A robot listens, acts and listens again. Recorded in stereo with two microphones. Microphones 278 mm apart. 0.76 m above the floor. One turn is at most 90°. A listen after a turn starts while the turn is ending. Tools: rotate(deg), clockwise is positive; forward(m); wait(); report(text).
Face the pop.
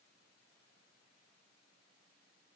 wait()
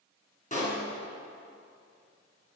rotate(-25)
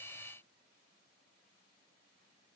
wait()
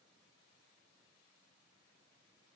report("I heard a pop, but can't make it out now. It was about straight ahead or 130° left.")